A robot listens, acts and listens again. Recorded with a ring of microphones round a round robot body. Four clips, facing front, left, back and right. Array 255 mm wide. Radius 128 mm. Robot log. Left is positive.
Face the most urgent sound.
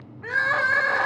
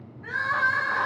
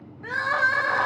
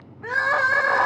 note: The crying: 70° right.
cmd yaw -70
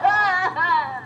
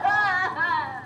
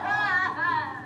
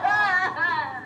end: Found it: crying, straight ahead, 1 to 2 m away.